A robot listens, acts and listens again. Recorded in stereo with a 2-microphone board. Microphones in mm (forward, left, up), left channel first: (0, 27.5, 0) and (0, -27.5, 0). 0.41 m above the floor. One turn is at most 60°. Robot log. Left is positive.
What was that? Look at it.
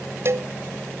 note: The cowbell: about 50° right or 130° right.
cmd yaw -50
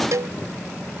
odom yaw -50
note: So it is at 75° right.
cmd yaw -60
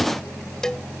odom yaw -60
note: The cowbell is now 10° left.
cmd yaw +10
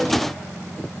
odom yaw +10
cmd idle
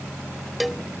end: Facing the cowbell.